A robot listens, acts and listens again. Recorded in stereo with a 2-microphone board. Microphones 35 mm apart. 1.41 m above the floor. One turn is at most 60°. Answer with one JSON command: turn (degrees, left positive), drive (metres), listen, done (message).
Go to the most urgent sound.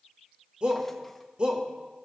{"turn": -30}
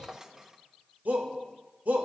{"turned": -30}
{"turn": -60}
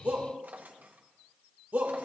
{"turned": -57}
{"turn": -60}
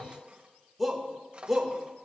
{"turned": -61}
{"drive": 1.0}
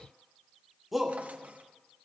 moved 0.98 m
{"drive": 1.0}
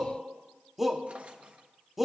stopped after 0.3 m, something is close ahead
{"turn": -10}
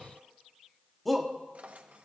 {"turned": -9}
{"done": "Arrived at the shout, straight ahead."}